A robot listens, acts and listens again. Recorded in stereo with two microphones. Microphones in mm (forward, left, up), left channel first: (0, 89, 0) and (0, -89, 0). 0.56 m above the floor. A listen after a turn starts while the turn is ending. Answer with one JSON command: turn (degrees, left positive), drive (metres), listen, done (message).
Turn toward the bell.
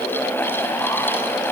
{"listen": true}
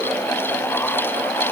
{"listen": true}
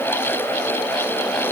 {"done": "I can't make out a bell to turn to."}